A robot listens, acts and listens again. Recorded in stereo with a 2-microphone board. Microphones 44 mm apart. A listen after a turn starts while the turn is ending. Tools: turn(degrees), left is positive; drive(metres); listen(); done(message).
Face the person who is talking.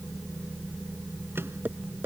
listen()
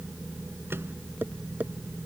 listen()
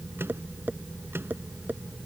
done("I can't make out anyone speaking.")